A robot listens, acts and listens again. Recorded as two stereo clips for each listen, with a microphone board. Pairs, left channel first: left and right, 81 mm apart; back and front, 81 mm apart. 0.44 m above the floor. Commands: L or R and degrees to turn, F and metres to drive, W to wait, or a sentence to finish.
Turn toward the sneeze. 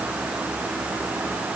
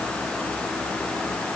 W
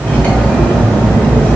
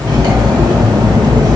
W
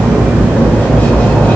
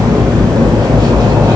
I can't make out a sneeze, only cutlery clinking.